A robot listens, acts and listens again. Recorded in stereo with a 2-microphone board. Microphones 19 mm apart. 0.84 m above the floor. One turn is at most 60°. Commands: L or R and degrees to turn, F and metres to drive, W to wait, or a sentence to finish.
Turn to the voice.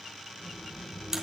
L60
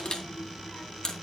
L35
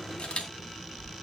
Facing the child speaking, over 4 m away.